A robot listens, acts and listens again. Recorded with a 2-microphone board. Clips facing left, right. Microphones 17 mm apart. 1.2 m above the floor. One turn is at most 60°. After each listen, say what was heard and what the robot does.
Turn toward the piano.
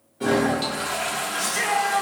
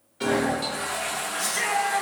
The piano: about 45° right or 135° right. Turn 45° right.
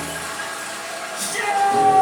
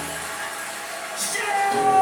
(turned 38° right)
Keep listening.
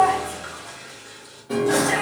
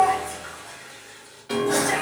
So it is at 95° right. Turn 60° right.
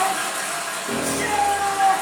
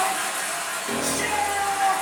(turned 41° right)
The piano is now 50° right. Turn 50° right.
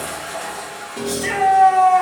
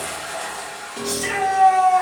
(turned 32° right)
The piano is now 20° right. Turn 20° right.
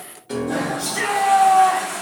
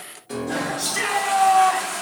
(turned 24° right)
Facing the piano, under 1 m away.